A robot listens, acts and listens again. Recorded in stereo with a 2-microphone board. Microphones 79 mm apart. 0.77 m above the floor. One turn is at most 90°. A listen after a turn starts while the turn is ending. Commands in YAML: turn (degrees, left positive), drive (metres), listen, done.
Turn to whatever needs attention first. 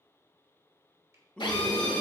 turn: 30
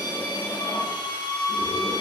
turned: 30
listen: true
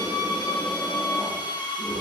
listen: true
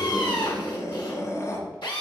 turn: 90
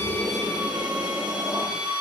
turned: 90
turn: 50
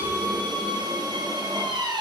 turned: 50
listen: true
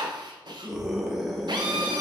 done: "Found it: a scream, straight ahead."